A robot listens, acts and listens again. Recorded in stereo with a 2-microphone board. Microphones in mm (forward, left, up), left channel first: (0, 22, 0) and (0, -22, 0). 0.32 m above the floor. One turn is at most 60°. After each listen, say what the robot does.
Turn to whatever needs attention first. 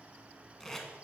Keep listening.
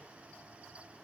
Keep listening.
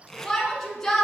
Turn 30° left.
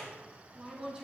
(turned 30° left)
Turn 20° right.
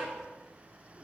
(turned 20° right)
Keep listening.
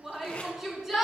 Facing the shout.